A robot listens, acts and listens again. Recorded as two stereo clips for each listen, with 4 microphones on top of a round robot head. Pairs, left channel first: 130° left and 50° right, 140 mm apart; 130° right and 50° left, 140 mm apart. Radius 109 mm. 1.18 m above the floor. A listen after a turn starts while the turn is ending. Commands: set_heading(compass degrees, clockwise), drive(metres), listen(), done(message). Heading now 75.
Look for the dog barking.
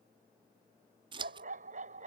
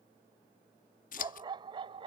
set_heading(85)
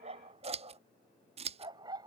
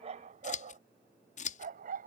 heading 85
set_heading(70)
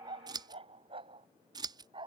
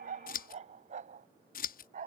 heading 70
set_heading(60)
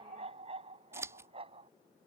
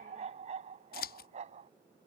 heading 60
done("Found it: a dog barking, straight ahead.")